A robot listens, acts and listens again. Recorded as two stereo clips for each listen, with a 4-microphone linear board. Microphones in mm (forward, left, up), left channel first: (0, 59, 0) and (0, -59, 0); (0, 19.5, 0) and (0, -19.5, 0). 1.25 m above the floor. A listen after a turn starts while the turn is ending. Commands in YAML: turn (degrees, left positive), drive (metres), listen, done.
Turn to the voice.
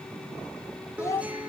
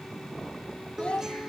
turn: 25
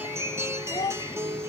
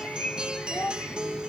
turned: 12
turn: 140
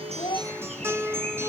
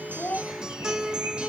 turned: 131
turn: 10
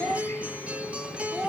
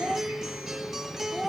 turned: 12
done: "Found it: a child speaking, straight ahead."